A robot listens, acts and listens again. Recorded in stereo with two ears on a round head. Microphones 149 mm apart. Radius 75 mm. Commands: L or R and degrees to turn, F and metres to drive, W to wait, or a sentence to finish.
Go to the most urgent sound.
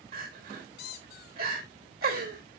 R60
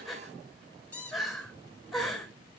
F1.0
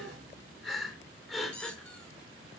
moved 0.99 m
F1.0
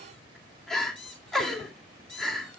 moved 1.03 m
F1.0
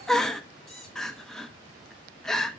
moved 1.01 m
F1.0
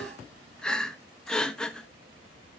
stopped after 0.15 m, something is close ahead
Arrived at the crying, straight ahead.